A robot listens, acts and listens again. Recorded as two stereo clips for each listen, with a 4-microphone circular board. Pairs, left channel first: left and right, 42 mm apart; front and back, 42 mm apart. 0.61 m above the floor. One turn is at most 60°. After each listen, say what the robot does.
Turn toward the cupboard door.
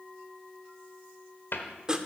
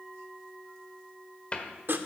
Turn 60° left.
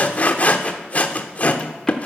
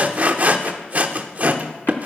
Keep listening.
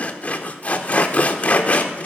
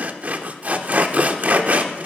Keep listening.
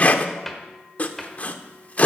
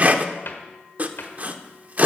Facing the cupboard door, 1 to 2 m away.